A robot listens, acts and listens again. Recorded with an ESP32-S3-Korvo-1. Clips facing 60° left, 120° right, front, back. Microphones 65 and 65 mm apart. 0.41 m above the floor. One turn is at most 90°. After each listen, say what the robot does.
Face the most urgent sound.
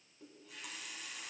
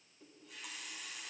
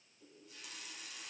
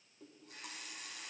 Keep listening.
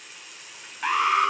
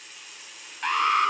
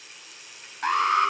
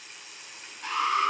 Turn 25° right.
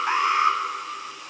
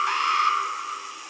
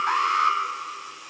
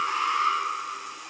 Facing the alarm.